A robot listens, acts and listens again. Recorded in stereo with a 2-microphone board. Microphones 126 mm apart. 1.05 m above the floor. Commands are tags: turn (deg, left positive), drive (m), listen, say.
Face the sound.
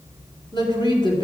<turn deg="40"/>
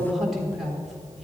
<say>Facing the woman speaking, 2 to 4 m away.</say>